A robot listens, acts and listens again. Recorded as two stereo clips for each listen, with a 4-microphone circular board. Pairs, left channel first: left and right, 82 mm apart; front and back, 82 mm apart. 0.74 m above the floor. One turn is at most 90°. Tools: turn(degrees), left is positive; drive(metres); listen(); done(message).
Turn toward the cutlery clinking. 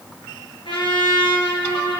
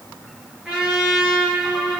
listen()
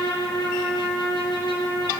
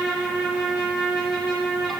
listen()
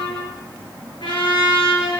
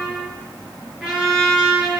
done("I can't make out cutlery clinking to turn to.")